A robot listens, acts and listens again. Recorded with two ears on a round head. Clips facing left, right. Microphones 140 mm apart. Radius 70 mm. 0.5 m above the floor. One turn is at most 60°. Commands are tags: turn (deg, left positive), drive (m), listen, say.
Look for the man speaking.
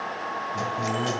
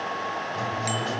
<turn deg="50"/>
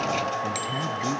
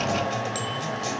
<listen/>
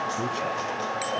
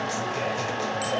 <listen/>
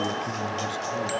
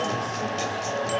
<say>I heard a man speaking, but can't make it out now. It was about straight ahead or 80° left.</say>